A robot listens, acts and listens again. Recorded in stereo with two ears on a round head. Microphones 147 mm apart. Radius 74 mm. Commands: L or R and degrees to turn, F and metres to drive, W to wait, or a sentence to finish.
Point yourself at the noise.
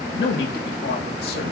L65
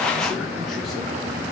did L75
W
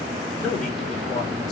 Found it: a man speaking, straight ahead.